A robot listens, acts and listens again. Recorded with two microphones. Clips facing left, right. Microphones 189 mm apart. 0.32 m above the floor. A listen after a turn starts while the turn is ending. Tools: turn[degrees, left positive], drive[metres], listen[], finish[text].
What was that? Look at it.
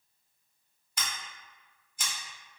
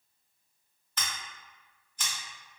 Action: turn[30]
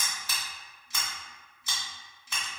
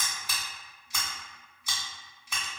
Thought: So it is at 15° right.
Action: turn[-15]
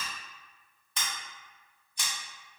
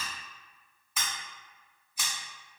Action: finish[Facing the scissors.]